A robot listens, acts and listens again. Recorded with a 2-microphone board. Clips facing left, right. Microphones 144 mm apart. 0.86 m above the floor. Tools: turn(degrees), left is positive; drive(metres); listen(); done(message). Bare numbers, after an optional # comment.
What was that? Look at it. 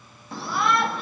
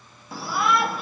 turn(-30)
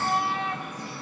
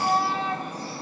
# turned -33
# So it is at 140° right.
turn(-140)
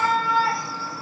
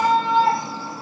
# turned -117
# The shout is now 25° right.
turn(-25)
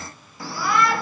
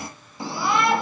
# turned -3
# The shout is now 25° right.
turn(-25)
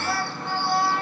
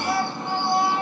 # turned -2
# The shout is now 20° right.
turn(-20)
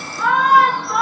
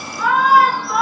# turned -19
done("Found it: a shout, straight ahead.")